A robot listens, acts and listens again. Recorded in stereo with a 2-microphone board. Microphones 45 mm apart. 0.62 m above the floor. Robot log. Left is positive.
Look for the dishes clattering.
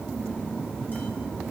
cmd idle
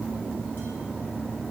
cmd idle
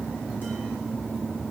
end: I can't make out dishes clattering.